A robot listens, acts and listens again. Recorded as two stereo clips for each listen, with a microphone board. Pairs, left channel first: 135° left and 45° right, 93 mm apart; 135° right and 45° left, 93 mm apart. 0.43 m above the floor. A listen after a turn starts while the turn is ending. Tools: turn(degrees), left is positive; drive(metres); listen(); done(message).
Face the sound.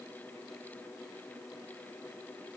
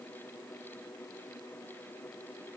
listen()
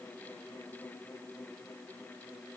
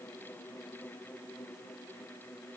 listen()
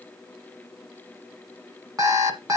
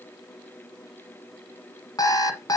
turn(degrees=-95)
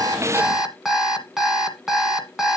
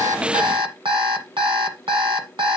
turn(degrees=40)
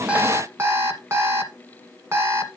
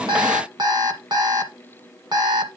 turn(degrees=15)
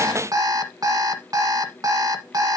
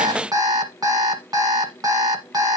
done("Facing the alarm clock.")